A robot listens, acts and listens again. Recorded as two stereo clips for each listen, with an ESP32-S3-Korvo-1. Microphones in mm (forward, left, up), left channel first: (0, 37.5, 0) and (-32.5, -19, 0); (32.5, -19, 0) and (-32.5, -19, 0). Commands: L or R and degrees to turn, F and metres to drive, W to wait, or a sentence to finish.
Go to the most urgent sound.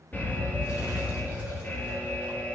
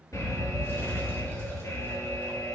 F1.0
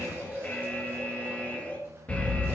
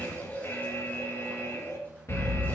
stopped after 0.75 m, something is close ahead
Arrived at the alarm, straight ahead.